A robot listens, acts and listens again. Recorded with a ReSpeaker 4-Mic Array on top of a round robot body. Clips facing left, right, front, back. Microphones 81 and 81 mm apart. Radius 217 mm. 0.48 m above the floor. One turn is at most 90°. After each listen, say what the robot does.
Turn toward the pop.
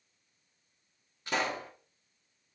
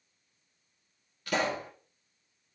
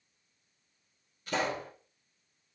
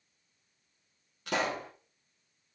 Turn 90° left.
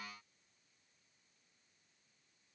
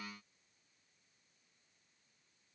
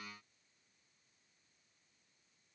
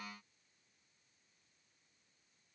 Turn 65° left.
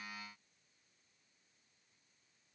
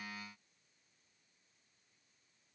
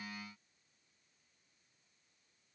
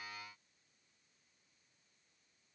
I heard a pop from this way, but can't make it out now.